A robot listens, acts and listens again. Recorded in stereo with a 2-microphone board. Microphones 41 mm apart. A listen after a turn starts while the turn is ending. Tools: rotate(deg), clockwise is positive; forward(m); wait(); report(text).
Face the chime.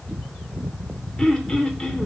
wait()
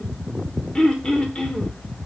wait()
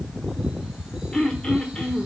report("I can't make out a chime, only throat clearing.")